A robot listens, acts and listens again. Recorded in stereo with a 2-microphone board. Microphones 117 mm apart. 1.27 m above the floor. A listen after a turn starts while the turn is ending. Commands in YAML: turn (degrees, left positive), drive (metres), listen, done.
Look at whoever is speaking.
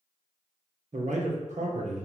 turn: -90
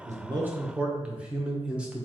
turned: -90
turn: -10
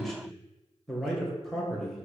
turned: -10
done: "Found it: a man speaking, straight ahead."